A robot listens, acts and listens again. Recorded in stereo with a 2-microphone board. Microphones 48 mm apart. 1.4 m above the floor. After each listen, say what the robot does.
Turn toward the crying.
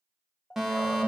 Turn 30° left.
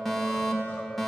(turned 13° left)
Keep listening.
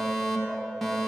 Keep listening.
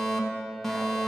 I heard crying, but can't make it out now. It was about 20° left or 135° left.